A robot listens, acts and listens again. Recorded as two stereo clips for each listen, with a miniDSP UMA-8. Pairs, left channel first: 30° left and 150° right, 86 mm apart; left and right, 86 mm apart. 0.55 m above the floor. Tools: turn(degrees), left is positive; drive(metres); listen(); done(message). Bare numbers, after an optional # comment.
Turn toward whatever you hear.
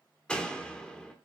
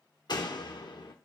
# The door slam: 105° left.
turn(105)
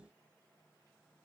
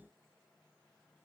done("I heard a door slam from this way, but can't make it out now.")